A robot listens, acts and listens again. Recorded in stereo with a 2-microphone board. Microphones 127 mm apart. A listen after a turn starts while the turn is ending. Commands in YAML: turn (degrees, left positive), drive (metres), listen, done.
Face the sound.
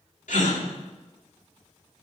turn: 90
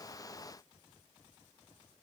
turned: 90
done: "Facing where the gasp came from. I can't hear it now."